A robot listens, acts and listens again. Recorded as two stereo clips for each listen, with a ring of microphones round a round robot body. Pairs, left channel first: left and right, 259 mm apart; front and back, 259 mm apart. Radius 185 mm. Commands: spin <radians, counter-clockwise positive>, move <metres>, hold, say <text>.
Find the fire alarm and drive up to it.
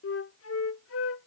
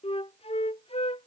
hold
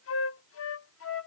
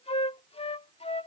hold
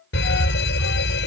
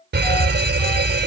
spin 2.44
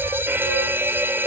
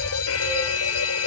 spin -0.17
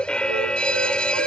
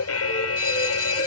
move 1.0
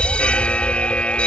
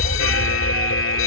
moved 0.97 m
move 1.0
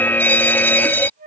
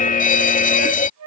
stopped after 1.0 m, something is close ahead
spin 0.26
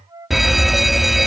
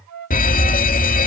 say Arrived at the fire alarm, straight ahead.